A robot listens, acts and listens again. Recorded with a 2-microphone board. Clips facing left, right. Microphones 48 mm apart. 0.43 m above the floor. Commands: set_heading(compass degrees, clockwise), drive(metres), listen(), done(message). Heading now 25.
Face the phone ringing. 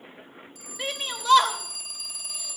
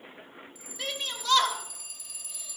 set_heading(325)
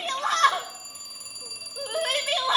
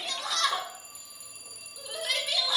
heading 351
set_heading(266)
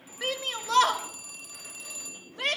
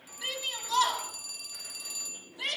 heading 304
set_heading(269)
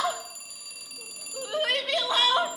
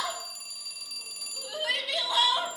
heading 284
set_heading(269)
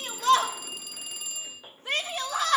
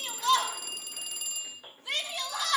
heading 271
done("Facing the phone ringing, 1 to 2 m away.")